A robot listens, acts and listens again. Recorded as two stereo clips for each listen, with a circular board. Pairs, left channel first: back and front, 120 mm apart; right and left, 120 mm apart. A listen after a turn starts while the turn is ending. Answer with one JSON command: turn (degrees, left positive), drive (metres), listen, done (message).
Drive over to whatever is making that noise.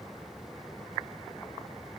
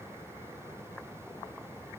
{"listen": true}
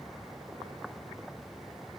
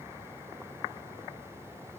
{"listen": true}
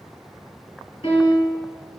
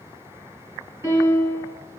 {"turn": 155}
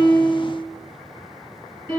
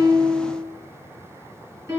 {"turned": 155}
{"turn": 40}
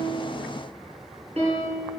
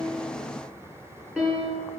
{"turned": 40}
{"turn": 10}
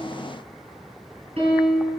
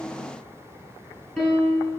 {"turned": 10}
{"drive": 1.0}
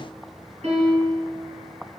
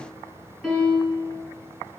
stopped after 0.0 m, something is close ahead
{"done": "Something is in my way. I am facing the piano but have not reached it."}